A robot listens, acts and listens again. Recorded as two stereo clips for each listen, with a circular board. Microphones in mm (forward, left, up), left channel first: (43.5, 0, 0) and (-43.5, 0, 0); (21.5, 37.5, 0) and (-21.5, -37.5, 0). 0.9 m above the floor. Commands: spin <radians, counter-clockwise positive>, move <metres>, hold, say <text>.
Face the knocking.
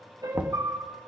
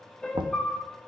spin -1.83
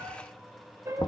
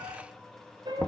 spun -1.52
spin -0.35
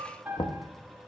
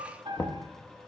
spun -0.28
say Found it: knocking, straight ahead, under 1 m away.